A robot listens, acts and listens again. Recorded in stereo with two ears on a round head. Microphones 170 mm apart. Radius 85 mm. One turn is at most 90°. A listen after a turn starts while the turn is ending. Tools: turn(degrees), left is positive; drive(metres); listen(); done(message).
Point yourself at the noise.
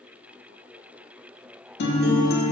turn(degrees=60)
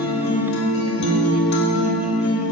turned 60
turn(degrees=65)
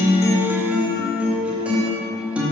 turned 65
done("Facing the guitar.")